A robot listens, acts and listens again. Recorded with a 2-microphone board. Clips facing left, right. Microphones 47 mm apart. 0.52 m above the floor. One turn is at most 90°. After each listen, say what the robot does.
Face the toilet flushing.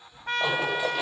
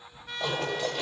Turn 30° left.
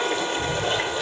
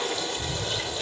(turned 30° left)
Turn 90° left.
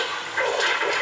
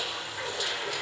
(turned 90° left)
Turn 75° left.
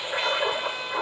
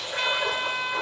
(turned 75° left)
Turn 20° left.
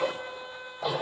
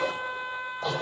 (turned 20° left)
Turn 10° left.
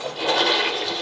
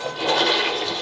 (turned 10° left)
Found it: a toilet flushing, straight ahead.